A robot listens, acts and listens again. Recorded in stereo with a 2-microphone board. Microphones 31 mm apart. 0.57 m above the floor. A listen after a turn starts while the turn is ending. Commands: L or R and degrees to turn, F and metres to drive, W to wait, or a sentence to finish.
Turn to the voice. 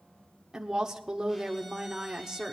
R20
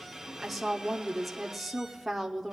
Found it: a woman speaking, straight ahead.